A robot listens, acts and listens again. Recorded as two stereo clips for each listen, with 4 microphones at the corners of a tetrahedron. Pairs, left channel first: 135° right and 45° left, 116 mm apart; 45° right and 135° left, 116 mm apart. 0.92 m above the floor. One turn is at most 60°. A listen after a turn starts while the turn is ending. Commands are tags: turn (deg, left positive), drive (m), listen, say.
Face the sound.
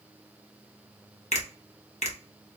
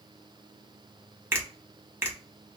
<turn deg="-60"/>
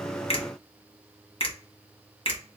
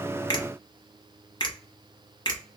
<turn deg="-60"/>
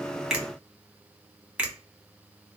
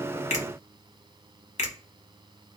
<turn deg="-35"/>
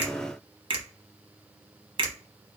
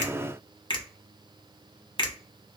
<say>Found it: a finger snap, straight ahead, under 1 m away.</say>